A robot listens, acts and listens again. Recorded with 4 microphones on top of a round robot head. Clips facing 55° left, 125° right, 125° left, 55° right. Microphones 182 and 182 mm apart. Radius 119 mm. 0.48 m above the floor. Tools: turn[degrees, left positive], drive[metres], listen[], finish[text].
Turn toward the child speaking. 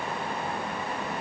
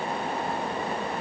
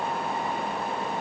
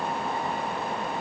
Action: listen[]
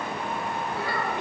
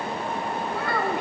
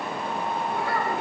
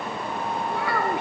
Thought: The child speaking: 80° right.
Action: turn[-80]
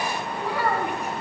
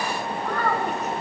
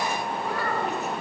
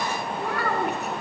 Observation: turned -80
Thought: The child speaking is now 25° right.
Action: turn[-25]
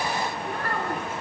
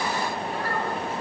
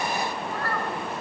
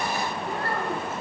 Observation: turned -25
Action: listen[]
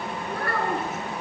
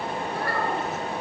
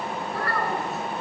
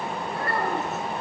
Thought: The child speaking is now 15° left.
Action: turn[15]
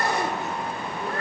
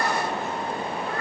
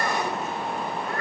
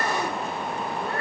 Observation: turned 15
Action: finish[Facing the child speaking.]